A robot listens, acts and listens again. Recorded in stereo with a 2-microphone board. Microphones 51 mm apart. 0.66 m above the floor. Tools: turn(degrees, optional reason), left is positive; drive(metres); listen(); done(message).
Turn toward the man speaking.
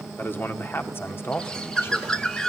turn(degrees=50, reason="The man speaking: about 50° left or 130° left.")
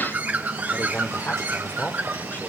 turn(degrees=40, reason="So it is at 40° left.")
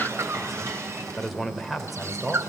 done("Facing the man speaking, 2 to 4 m away.")